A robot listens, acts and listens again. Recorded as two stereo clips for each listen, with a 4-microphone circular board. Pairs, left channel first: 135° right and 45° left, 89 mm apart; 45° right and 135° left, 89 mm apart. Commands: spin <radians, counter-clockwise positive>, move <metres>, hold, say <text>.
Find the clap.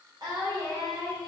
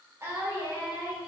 hold
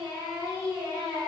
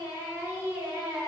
hold
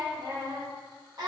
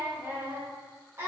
say I can't make out a clap, only singing.